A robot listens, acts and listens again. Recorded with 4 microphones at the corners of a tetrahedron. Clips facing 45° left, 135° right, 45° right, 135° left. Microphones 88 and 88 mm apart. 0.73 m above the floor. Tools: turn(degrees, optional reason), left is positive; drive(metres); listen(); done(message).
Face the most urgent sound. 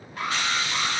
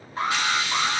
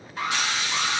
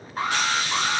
turn(degrees=170, reason="The alarm: 170° left.")
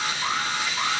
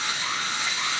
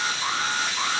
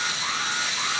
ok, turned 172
done("Facing the alarm.")